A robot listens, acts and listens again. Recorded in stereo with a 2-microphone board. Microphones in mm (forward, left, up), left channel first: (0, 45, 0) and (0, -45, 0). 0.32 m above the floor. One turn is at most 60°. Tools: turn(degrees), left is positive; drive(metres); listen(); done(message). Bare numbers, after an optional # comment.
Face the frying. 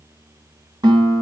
listen()
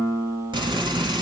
# The frying: about 70° right or 110° right.
turn(-60)
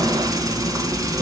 # So it is at 45° right.
turn(-45)
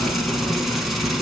done("Facing the frying, 1 to 2 m away.")